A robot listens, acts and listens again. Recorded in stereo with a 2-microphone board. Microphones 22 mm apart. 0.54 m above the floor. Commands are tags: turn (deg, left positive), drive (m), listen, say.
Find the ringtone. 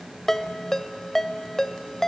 <turn deg="30"/>
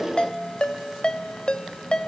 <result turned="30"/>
<turn deg="135"/>
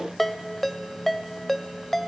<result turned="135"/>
<turn deg="10"/>
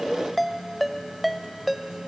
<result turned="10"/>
<say>Facing the ringtone.</say>